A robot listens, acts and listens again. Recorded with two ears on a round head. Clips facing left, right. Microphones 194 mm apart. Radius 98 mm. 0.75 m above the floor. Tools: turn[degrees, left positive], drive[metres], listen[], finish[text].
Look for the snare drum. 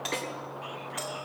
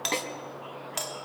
Thought: The snare drum: about 55° right or 125° right.
Action: turn[-55]
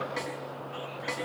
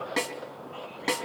Thought: So it is at 65° right.
Action: turn[-65]
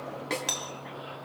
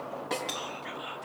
Thought: The snare drum is now 30° left.
Action: turn[30]
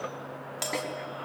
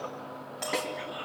Action: finish[Found it: a snare drum, straight ahead, 2 to 4 m away.]